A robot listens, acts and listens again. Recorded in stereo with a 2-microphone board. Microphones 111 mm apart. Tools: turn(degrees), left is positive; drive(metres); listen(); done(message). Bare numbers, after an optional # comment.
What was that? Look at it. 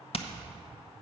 # The hammering: about 55° left or 125° left.
turn(55)
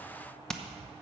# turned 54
done("Facing the hammering, under 1 m away.")